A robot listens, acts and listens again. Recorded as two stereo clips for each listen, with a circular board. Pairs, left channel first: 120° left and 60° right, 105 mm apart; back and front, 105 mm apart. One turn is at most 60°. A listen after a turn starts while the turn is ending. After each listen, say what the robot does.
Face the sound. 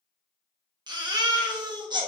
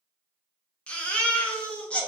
Turn 60° right.
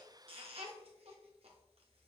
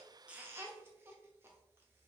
Turn 60° right.
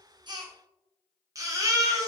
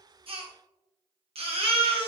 Facing the baby crying, under 1 m away.